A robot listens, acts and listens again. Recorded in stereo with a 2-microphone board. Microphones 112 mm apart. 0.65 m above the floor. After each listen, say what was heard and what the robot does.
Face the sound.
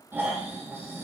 The snoring: about 20° right or 160° right. Turn 20° right.
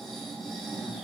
Found it: snoring, straight ahead.